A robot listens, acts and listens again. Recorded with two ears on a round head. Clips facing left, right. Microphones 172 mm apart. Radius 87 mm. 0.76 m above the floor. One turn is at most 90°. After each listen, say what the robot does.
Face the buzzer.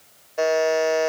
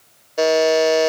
Turn 45° right.
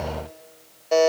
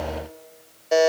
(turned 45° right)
Turn 10° right.
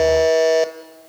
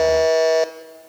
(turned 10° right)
Facing the buzzer, under 1 m away.